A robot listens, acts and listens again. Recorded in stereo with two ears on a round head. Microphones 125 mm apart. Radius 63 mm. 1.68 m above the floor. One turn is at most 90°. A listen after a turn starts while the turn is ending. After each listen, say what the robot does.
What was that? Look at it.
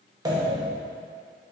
Turn 30° right.
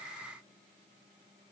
Keep listening.
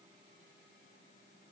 I heard a pop, but can't make it out now. It was about straight ahead or 120° right.